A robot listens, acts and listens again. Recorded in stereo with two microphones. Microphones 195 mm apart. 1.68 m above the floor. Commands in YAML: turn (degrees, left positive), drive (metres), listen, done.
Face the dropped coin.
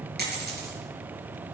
turn: -55
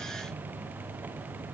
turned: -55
listen: true
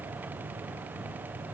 done: "I heard a dropped coin, but can't make it out now. It was about straight ahead or 70° right."